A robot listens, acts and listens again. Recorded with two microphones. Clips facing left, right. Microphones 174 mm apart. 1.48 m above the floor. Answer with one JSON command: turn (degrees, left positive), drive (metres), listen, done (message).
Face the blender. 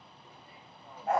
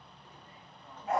{"listen": true}
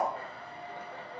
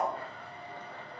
{"turn": 50}
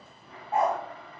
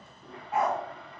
{"done": "Found it: a blender, straight ahead, 2 to 4 m away."}